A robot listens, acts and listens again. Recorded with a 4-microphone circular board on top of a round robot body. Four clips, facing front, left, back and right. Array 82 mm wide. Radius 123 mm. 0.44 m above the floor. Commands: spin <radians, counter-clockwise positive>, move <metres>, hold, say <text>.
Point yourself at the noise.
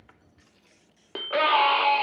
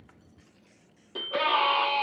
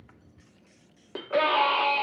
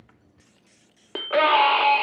spin -1.31
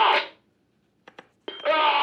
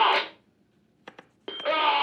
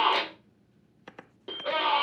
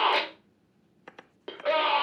spin 0.17
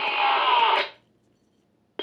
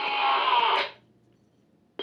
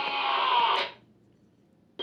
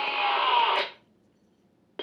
say Found it: a scream, straight ahead.